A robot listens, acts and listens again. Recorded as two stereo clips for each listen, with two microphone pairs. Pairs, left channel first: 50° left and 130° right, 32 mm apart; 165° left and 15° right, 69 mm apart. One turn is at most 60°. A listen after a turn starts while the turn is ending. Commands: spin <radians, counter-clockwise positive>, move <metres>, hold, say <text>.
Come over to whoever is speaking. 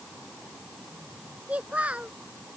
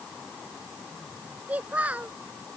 spin -1.05
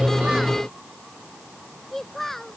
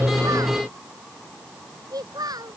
spin -0.52
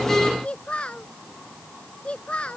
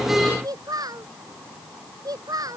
move 1.0
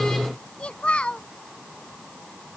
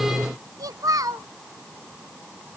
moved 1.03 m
move 1.0
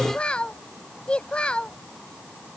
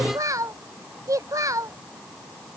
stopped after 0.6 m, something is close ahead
say I am next to the child speaking.